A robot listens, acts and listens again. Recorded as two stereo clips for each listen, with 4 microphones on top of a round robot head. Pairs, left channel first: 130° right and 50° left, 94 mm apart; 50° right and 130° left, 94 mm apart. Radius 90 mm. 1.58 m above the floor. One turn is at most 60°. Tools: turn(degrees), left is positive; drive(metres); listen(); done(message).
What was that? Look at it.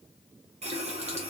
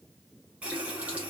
turn(degrees=55)
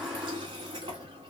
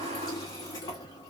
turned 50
done("Facing the running tap.")